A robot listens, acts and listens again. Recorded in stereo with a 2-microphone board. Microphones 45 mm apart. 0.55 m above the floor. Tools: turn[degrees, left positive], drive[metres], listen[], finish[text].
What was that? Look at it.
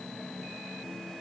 Action: listen[]
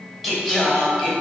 Action: turn[-30]
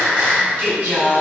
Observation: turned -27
Thought: So it is at 130° right.
Action: turn[-130]
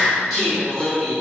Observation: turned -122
Action: finish[Found it: singing, straight ahead.]